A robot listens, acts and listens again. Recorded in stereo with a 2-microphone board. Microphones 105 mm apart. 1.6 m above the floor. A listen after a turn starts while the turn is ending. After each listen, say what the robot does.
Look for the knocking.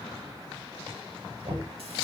Turn 55° right.
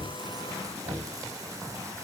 Turn 75° right.
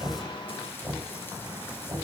Turn 15° right.
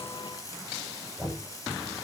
Facing the knocking, over 4 m away.